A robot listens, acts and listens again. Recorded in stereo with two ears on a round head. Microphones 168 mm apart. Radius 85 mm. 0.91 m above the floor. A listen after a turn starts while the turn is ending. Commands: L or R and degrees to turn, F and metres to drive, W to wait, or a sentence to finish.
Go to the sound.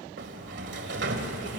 R60
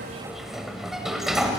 F1.0
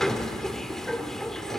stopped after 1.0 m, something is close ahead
Arrived at the sliding door, straight ahead.